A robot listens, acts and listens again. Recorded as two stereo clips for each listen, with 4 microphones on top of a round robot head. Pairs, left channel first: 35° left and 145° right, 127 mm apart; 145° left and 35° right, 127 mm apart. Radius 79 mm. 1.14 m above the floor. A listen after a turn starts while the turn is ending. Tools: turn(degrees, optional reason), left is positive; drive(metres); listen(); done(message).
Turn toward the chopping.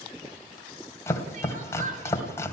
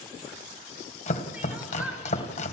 turn(degrees=105, reason="The chopping: 105° left.")
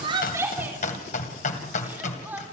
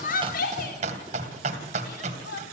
done("Facing the chopping, 2 to 4 m away.")